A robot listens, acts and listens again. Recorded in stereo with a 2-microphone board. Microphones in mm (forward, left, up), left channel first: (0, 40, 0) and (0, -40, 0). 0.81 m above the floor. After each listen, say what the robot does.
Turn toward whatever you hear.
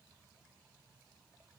Keep listening.
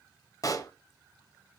Turn 45° left.
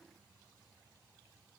Keep listening.
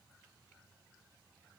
I heard a pop, but can't make it out now. It was about straight ahead or 90° left.